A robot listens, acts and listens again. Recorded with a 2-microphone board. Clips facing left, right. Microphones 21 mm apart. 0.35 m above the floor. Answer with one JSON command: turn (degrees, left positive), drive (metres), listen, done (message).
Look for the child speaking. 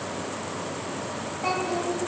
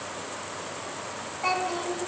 {"turn": -15}
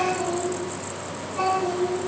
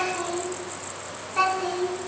{"turn": -130}
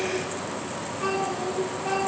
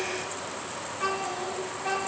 {"turn": -25}
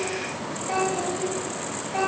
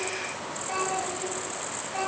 {"turn": 10}
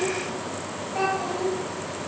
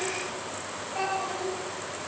{"done": "Found it: a child speaking, straight ahead."}